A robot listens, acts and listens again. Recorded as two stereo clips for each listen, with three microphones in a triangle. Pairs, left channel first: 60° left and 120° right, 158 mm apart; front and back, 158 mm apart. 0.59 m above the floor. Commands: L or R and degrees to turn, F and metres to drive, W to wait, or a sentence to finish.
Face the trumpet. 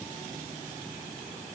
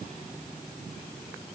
W
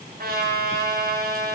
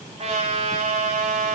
R135
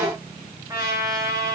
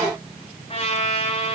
R50
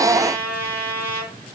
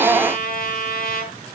R20
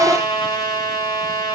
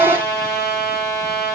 Facing the trumpet.